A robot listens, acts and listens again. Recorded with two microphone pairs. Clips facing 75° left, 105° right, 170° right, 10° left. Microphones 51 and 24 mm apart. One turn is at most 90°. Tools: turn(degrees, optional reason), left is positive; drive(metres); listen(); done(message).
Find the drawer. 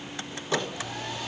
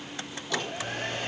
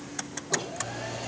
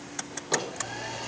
turn(degrees=15, reason="The drawer: 15° left.")
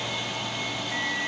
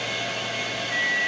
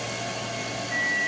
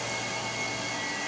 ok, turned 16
listen()
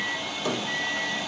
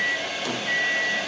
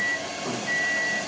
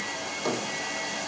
done("Found it: a drawer, straight ahead.")